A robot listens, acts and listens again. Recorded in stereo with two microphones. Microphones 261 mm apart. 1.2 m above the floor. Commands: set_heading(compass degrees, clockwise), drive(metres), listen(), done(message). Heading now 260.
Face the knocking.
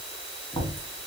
set_heading(230)
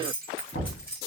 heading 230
set_heading(95)
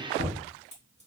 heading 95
set_heading(35)
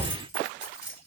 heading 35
set_heading(15)
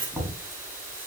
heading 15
done("Facing the knocking, 1 to 2 m away.")